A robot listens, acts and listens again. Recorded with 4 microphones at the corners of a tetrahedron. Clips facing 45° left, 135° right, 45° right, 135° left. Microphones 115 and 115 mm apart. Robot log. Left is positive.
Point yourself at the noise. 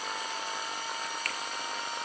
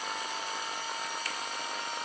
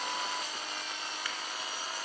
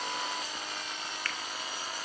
note: The finger snap: 30° left.
cmd yaw +30
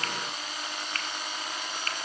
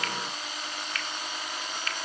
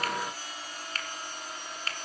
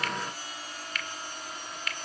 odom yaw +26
end: Facing the finger snap, 1 to 2 m away.